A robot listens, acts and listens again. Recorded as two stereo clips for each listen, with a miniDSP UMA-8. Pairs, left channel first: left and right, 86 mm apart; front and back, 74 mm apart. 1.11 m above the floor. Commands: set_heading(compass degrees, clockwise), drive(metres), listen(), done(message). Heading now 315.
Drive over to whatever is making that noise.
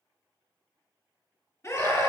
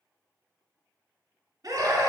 set_heading(170)
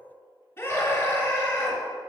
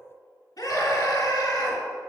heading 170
set_heading(140)
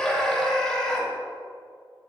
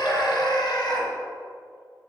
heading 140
drive(1.0)
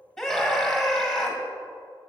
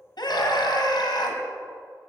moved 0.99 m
drive(1.0)
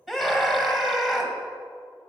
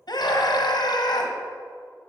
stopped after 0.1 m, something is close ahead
done("I am next to the scream.")